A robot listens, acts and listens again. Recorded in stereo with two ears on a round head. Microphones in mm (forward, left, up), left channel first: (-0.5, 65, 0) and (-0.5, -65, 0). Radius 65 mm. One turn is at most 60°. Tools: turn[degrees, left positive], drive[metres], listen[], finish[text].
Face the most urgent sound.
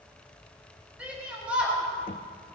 Action: turn[-30]
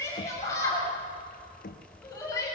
Thought: So it is at 20° left.
Action: turn[20]
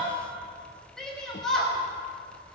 Action: finish[Facing the shout.]